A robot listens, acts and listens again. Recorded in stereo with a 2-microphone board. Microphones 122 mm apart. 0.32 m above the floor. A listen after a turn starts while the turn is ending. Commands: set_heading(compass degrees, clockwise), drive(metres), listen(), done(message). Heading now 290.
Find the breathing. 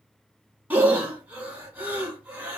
set_heading(320)
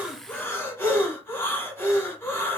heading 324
set_heading(304)
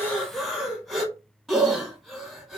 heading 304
done("Facing the breathing, under 1 m away.")